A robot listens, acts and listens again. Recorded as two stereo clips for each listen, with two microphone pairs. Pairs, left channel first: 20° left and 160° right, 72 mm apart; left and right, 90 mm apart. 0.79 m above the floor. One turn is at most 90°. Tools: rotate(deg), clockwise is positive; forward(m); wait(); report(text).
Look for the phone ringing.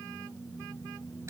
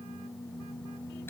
wait()
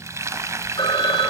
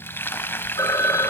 rotate(-35)
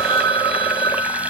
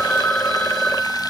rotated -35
rotate(-10)
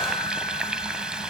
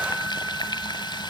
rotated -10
wait()
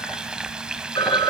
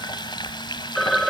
report("Facing the phone ringing, 2 to 4 m away.")